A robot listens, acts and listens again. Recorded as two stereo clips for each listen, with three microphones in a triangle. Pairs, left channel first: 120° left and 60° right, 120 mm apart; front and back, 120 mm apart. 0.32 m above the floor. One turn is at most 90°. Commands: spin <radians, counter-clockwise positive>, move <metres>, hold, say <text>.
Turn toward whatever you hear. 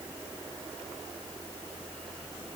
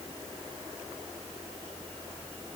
hold
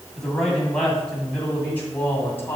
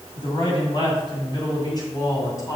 spin 0.96
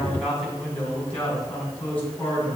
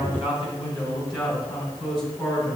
spin 0.79
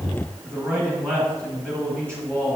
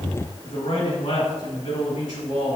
say Found it: a man speaking, straight ahead.